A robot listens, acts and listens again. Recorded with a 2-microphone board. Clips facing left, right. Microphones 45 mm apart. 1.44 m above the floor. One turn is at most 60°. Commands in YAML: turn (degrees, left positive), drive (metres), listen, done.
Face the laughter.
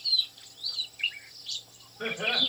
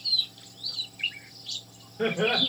turn: -60
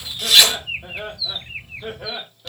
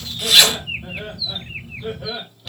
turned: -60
turn: 35
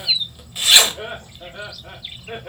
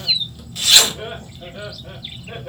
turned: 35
turn: 25
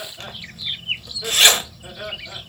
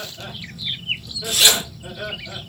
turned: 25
done: "Found it: laughter, straight ahead, 2 to 4 m away."